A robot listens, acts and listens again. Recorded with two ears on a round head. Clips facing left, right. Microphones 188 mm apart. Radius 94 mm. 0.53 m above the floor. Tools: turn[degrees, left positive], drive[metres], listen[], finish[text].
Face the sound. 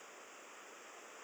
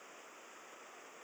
Action: listen[]
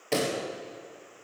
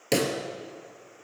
Thought: The pop: about 50° right or 130° right.
Action: turn[-50]
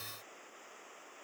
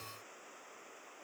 Action: listen[]
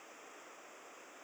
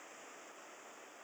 Action: finish[I heard a pop, but can't make it out now. It was about straight ahead or 80° right.]